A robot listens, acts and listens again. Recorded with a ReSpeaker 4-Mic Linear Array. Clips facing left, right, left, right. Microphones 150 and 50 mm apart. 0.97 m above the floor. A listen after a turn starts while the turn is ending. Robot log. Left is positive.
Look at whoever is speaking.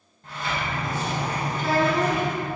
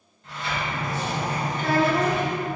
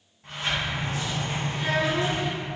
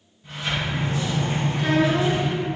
note: The child speaking: about 60° right or 120° right.
cmd yaw -60
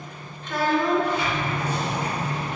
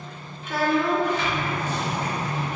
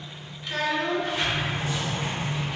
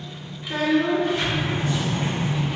end: Facing the child speaking, under 1 m away.